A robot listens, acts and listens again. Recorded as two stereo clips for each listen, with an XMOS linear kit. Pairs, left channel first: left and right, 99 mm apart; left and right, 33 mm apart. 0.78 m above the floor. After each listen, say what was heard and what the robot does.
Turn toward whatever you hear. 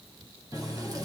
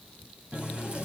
The running tap: about 40° right or 140° right. Turn 40° right.
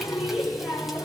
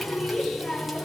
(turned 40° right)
Found it: a running tap, straight ahead.